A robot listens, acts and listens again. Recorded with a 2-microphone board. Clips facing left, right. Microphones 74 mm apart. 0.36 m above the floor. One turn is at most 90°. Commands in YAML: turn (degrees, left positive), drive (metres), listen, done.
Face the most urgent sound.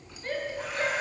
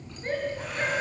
turn: -25
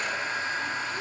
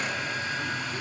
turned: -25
listen: true
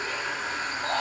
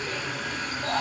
turn: -90
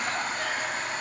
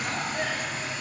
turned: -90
turn: -40
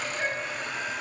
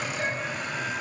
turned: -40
turn: 20
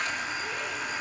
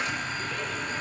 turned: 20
listen: true
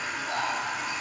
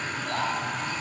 turn: 10
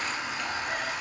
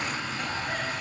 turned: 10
listen: true
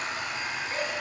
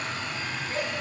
done: "Facing the shout, over 4 m away."